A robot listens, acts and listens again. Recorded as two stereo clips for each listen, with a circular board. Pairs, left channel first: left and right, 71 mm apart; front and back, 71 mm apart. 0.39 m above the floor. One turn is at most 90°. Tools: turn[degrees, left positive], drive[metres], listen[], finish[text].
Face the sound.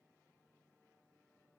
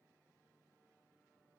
Action: listen[]
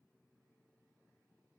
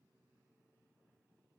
Action: listen[]
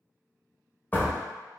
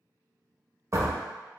Thought: The door slam: 150° left.
Action: turn[90]
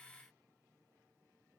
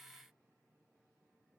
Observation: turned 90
Thought: Nothing new. It was at 60° left.
Action: turn[60]
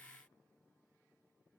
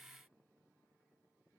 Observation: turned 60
Action: finish[I heard a door slam from this way, but can't make it out now.]